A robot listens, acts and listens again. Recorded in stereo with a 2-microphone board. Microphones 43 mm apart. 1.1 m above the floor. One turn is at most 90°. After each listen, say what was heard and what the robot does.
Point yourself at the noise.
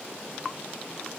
Keep listening.
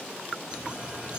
The cutlery clinking: about 25° right or 155° right. Turn 25° right.
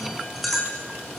Facing the cutlery clinking, over 4 m away.